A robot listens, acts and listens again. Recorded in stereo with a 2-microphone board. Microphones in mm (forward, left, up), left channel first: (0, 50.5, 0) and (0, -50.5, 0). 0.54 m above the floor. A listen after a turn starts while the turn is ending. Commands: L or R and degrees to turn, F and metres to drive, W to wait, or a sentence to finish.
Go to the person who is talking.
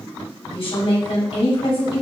L65
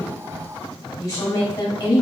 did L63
L40
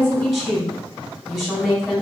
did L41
F1.0
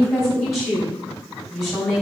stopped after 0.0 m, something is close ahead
Blocked. The woman speaking is further on, straight ahead.